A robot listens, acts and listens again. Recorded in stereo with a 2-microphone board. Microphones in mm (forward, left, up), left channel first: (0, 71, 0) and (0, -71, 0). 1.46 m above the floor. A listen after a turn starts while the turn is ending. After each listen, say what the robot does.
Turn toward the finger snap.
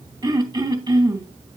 Keep listening.
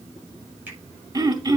Turn 30° right.
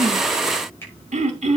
Turn 20° left.
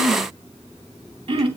Keep listening.
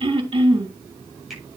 Found it: a finger snap, straight ahead.